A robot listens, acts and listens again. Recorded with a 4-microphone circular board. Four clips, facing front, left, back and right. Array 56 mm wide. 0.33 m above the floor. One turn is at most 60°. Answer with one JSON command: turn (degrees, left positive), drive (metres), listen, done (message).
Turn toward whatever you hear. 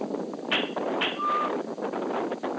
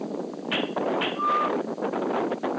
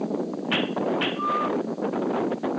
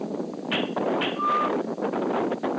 {"listen": true}
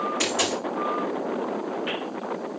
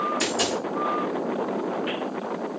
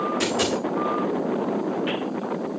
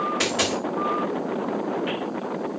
{"turn": -60}
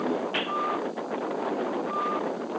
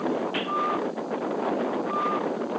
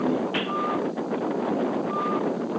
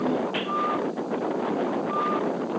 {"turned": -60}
{"turn": -20}
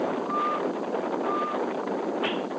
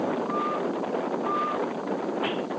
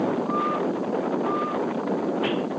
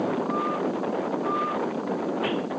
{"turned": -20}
{"done": "I heard a dropped coin from this way, but can't make it out now."}